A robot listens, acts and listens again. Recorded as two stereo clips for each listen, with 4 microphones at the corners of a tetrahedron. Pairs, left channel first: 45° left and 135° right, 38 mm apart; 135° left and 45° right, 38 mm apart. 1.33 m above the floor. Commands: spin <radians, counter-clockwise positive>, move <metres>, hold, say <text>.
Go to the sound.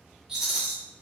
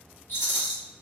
spin 2.62
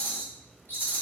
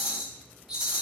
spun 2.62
spin 0.52
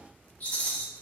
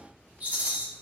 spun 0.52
move 1.0
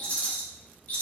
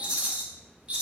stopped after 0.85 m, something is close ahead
say Arrived at the rattle, straight ahead.